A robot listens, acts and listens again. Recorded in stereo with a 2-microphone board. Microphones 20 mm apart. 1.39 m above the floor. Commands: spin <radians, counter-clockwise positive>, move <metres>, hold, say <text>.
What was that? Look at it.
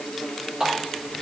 spin -0.70
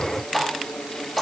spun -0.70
say Found it: a running tap, straight ahead, 2 to 4 m away.